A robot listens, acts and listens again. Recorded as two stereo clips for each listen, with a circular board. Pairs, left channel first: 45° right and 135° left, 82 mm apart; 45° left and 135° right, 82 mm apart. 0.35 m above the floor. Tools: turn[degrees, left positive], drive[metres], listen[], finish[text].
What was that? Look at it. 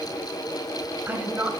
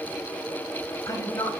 Thought: The woman speaking: 70° left.
Action: turn[70]
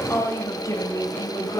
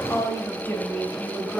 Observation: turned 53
Thought: The woman speaking is now 35° right.
Action: turn[-35]
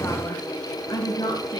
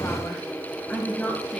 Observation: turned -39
Thought: The woman speaking is now 20° right.
Action: turn[-20]
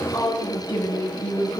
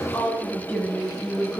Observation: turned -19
Thought: The woman speaking is now 20° right.
Action: turn[-20]
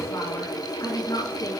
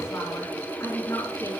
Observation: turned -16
Action: finish[Facing the woman speaking, 2 to 4 m away.]